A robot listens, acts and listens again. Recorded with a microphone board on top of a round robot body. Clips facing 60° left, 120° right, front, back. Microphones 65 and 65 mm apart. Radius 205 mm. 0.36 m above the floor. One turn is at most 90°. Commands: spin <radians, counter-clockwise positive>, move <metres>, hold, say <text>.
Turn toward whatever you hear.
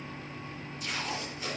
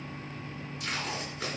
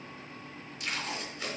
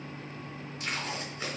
spin -1.57
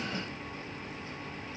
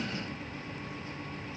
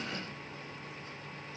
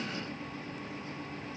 spin -0.52
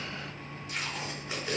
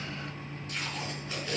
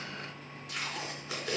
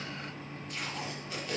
spin -0.26
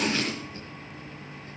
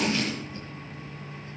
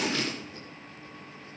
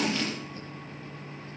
say Facing the tape being pulled, 2 to 4 m away.